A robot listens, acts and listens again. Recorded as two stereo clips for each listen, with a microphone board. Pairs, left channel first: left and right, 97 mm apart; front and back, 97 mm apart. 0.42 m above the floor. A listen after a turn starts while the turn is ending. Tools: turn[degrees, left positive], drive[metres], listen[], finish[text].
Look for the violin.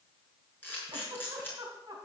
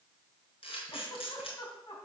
Action: listen[]
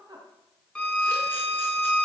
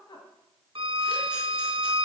Thought: The violin: 170° left.
Action: turn[170]
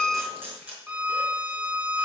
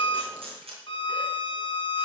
Thought: The violin is now 15° right.
Action: turn[-15]
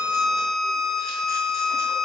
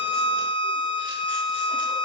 Action: finish[Facing the violin.]